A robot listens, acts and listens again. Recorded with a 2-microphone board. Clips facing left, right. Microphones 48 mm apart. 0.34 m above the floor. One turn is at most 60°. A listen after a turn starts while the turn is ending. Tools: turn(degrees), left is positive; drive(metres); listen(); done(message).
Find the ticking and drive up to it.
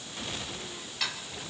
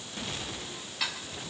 turn(degrees=-30)
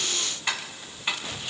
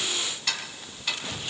turn(degrees=25)
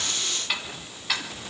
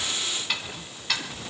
drive(metres=1.0)
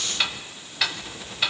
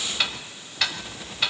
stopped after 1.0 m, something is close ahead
done("I am next to the ticking.")